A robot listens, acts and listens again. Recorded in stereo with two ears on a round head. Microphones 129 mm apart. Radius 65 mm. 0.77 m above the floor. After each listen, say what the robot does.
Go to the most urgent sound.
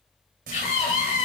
Turn 60° left.
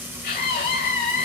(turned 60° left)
Turn 60° left.
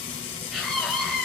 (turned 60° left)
Drive 1.0 m forward.
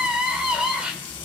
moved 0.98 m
Drive 1.0 m forward.
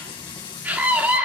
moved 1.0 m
Turn 10° right.
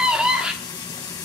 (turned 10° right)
Drive 1.0 m forward.
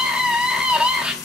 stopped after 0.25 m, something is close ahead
Turn 10° right.
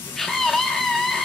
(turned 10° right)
Arrived at the scream, straight ahead.